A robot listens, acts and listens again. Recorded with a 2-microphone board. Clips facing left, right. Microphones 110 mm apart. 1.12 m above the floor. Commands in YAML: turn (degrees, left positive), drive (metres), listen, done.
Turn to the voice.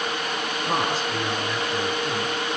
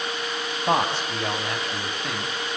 turn: -70
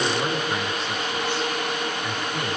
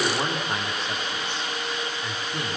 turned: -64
listen: true
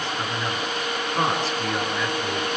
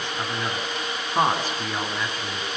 turn: -40
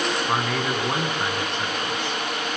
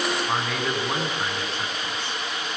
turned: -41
done: "Facing the man speaking, over 4 m away."